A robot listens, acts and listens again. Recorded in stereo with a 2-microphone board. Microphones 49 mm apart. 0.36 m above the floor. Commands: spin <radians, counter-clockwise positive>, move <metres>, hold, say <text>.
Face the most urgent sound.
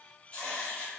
hold
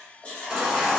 spin -0.52
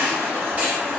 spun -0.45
spin -2.53
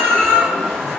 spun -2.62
say Found it: a baby crying, straight ahead.